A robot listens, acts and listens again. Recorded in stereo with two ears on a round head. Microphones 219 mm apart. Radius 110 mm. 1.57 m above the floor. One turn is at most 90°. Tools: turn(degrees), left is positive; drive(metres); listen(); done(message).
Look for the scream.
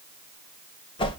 listen()
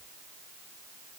listen()
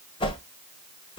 done("I can't make out a scream, only a whoosh.")